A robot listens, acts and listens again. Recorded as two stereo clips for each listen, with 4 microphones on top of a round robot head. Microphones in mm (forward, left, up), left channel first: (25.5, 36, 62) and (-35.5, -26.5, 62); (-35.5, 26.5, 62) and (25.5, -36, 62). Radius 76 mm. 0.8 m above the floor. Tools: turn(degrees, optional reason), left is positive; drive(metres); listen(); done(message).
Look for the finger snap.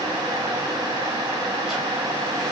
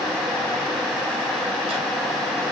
listen()
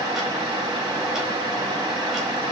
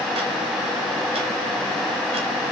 listen()
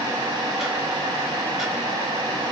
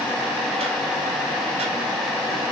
done("I can't make out a finger snap to turn to.")